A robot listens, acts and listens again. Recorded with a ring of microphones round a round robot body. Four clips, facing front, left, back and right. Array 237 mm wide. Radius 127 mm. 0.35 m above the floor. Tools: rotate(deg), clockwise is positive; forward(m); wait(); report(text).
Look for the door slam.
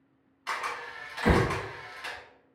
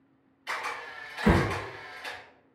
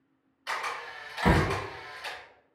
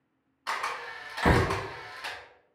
rotate(125)
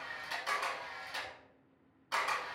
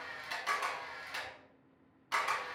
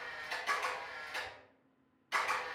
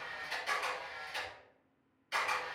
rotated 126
report("Facing where the door slam came from. I can't hear it now.")